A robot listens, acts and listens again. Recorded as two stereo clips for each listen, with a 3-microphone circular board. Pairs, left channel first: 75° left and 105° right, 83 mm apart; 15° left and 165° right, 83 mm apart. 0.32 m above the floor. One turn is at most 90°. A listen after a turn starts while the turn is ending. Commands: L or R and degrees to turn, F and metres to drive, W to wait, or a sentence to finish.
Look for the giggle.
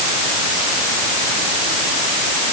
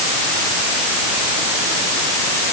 W
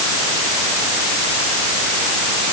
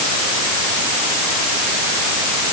W
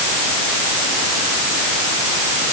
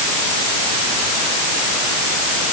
I can't make out a giggle to turn to.